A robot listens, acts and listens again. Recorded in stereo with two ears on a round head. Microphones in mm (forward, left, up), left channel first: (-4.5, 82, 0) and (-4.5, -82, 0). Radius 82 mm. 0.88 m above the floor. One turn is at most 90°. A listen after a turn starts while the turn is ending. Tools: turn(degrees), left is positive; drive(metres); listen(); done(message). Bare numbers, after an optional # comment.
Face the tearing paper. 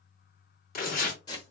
# The tearing paper: about 50° left or 130° left.
turn(50)
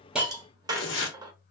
# So it is at 80° left.
turn(80)
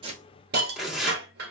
done("Found it: tearing paper, straight ahead.")